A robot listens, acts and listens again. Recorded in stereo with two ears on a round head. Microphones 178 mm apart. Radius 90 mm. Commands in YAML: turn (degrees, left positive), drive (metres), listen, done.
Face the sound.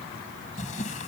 turn: 40
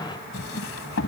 turn: 100
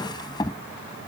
turn: 20
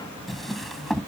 done: "Found it: a drawer, straight ahead."